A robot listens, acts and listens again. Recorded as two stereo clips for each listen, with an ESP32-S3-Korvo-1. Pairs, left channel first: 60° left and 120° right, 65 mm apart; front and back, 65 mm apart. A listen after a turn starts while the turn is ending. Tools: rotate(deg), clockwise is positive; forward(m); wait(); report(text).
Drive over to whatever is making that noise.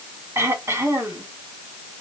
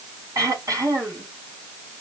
rotate(160)
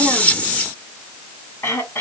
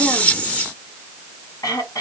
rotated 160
rotate(-10)
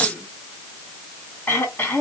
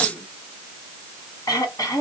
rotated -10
forward(1.0)
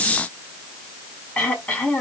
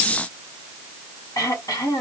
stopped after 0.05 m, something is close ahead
report("Blocked. The throat clearing is further on, straight ahead.")